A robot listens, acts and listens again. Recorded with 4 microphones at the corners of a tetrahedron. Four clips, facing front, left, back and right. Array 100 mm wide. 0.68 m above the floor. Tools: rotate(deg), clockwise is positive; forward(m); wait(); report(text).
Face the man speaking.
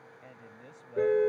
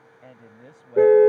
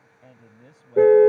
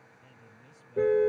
rotate(-100)
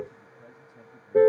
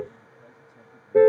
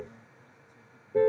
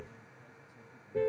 wait()
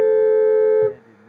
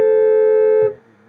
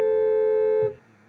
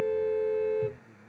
rotate(-30)
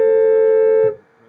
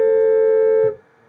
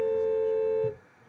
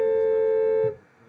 wait()
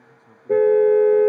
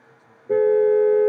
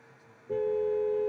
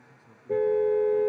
wait()
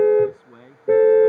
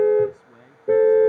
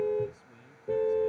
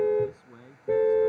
report("Found it: a man speaking, straight ahead.")